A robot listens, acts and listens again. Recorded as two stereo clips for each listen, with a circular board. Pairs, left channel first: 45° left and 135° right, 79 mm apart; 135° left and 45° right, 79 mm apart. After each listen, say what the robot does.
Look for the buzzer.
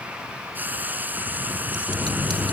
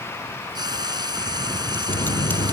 Turn 135° left.
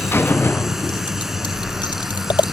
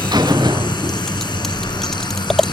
Turn 15° right.
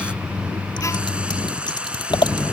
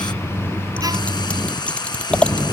Found it: a buzzer, straight ahead.